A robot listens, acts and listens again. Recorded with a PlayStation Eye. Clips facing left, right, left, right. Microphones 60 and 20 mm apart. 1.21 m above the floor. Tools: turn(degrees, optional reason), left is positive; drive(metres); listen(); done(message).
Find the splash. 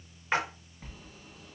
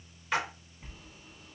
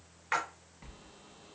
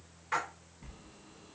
turn(degrees=35, reason="The splash: about 35° left or 145° left.")
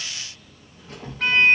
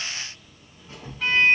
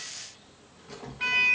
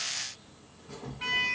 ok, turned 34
listen()
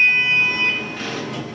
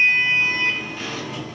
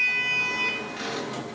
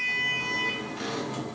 done("I heard a splash, but can't make it out now. It was about straight ahead or 110° left.")